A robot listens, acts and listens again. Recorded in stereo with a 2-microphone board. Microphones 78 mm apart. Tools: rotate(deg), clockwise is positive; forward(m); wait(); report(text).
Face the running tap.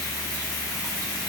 wait()
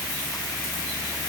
wait()
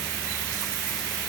report("I can't make out a running tap.")